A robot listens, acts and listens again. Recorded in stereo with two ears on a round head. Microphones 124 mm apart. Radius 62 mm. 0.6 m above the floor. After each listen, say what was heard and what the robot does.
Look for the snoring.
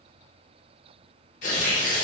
Keep listening.
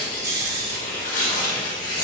The snoring: about 20° right or 160° right. Turn 20° right.
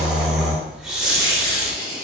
Found it: snoring, straight ahead.